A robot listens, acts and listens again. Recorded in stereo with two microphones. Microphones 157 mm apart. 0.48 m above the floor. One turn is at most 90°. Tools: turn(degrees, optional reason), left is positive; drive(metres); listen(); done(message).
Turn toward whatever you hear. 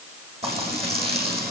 turn(degrees=-40, reason="The frying: about 40° right or 140° right.")
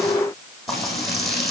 done("Found it: frying, straight ahead, over 4 m away.")